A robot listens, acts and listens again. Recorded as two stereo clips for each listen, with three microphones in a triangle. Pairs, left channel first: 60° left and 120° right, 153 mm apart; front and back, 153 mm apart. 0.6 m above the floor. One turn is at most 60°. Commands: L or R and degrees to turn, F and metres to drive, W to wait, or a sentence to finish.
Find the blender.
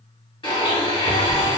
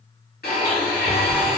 Found it: a blender, straight ahead.